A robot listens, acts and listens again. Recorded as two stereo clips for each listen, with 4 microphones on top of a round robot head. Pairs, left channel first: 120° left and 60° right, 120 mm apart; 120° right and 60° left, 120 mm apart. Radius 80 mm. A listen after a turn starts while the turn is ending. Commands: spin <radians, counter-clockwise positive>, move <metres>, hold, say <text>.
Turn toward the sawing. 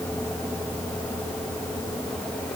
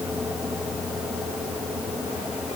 hold
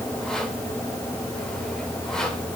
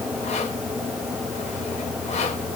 hold
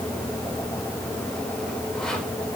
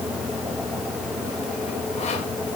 say I can't make out sawing to turn to.